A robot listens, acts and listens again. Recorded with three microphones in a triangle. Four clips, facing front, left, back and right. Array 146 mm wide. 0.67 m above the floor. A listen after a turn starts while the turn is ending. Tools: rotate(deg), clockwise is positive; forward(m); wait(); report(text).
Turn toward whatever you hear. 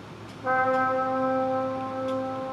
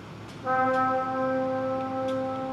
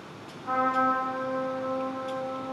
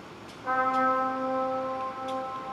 rotate(-25)
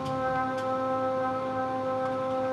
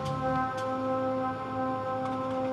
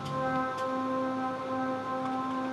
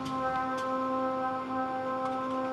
report("Found it: a trumpet, straight ahead, 1 to 2 m away.")